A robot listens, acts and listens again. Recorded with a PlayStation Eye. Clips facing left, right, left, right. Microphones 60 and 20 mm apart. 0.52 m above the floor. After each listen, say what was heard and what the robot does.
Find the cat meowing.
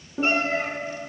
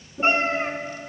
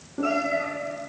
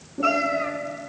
The cat meowing: about 30° right or 150° right. Turn 30° right.
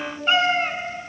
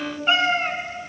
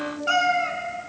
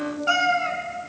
Facing the cat meowing.